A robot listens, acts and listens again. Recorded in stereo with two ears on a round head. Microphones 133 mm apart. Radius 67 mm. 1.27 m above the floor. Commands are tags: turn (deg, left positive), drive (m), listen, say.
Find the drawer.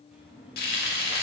<turn deg="-30"/>
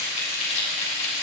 <listen/>
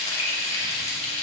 <listen/>
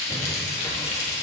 <say>I heard a drawer, but can't make it out now. It was about 25° left or 145° right.</say>